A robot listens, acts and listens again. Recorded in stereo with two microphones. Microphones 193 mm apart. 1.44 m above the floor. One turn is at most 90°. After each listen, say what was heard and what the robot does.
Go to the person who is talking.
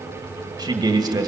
The man speaking: about 20° right or 160° right. Turn 20° right.
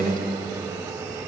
So it is at 140° right. Turn 90° right.
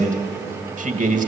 The man speaking is now 40° right. Turn 40° right.
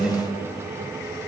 Drive 1.0 m forward.
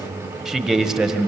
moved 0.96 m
Drive 1.0 m forward.
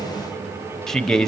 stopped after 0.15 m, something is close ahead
Arrived at the man speaking, straight ahead.